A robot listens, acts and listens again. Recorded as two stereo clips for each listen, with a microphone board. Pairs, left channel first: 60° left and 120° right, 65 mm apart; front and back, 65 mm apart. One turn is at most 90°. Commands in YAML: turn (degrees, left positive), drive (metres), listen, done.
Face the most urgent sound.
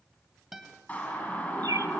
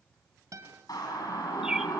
done: "Facing the siren, over 4 m away."